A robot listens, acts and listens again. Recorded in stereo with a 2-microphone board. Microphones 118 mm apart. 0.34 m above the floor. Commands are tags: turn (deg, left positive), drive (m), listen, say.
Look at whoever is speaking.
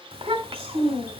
<turn deg="-55"/>
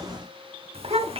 <turn deg="-65"/>
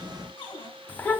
<turn deg="15"/>
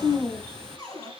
<say>Found it: a child speaking, straight ahead, 1 to 2 m away.</say>